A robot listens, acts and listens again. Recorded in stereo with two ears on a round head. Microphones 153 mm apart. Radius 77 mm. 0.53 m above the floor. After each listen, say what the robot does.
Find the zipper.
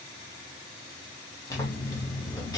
Turn 25° left.
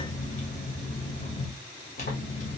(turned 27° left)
Turn 130° left.
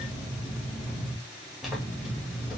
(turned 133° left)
Facing the zipper, 2 to 4 m away.